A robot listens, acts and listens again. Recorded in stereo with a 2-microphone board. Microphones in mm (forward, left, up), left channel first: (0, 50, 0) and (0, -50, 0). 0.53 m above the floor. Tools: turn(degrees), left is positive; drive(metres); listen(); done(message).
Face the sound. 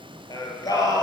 turn(degrees=35)
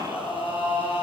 turn(degrees=115)
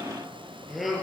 done("Found it: singing, straight ahead.")